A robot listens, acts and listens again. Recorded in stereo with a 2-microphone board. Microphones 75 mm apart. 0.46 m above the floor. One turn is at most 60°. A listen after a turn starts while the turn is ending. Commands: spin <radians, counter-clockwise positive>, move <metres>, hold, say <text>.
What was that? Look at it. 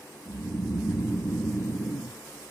spin 0.52
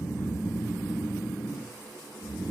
spin -0.52
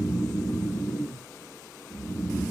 spin -0.35
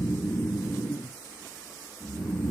spin -0.17
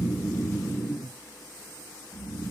say Facing the snoring.